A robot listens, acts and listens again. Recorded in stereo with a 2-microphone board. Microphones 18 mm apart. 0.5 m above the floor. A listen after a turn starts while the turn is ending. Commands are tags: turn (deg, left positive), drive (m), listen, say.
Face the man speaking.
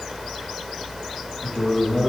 <turn deg="-30"/>
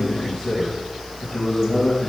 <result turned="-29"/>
<turn deg="25"/>
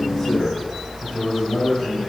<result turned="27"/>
<say>Found it: a man speaking, straight ahead, 2 to 4 m away.</say>